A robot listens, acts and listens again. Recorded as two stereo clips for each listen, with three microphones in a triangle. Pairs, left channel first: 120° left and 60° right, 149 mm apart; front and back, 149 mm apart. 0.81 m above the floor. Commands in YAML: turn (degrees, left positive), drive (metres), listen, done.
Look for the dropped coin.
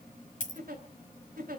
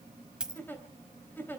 turn: 95
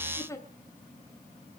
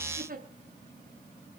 done: "I heard a dropped coin from this way, but can't make it out now."